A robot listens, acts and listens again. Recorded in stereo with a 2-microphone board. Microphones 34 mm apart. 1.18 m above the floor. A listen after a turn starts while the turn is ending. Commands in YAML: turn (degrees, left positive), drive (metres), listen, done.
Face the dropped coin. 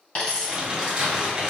turn: 30
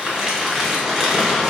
listen: true
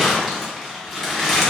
done: "I heard a dropped coin, but can't make it out now. It was about straight ahead or 120° left."